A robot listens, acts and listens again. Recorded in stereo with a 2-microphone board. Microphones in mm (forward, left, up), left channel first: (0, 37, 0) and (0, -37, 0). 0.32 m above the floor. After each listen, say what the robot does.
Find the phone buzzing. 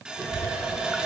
Keep listening.
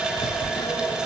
Turn 90° left.
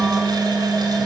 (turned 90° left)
Turn 10° right.
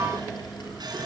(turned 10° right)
Keep listening.
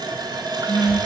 Facing the phone buzzing, 1 to 2 m away.